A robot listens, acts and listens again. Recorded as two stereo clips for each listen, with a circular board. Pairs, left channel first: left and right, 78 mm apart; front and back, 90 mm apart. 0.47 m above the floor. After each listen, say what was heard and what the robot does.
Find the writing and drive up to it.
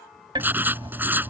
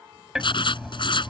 The writing: 25° right. Turn 25° right.
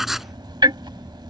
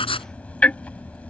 Drive 1.0 m forward.
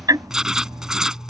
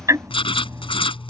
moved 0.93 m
The writing is now 10° right. Turn 10° right.
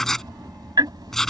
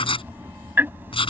Drive 1.0 m forward.
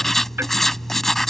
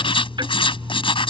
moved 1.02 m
Drive 1.0 m forward.
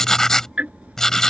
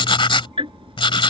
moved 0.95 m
Drive 1.0 m forward.
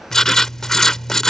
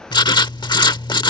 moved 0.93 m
Drive 1.0 m forward.
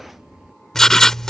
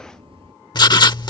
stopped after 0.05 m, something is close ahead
Arrived at the writing, straight ahead.